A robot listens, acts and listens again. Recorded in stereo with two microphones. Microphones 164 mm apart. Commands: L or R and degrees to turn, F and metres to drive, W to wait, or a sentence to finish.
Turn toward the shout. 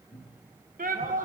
R60
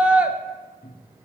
R10
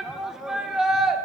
Facing the shout.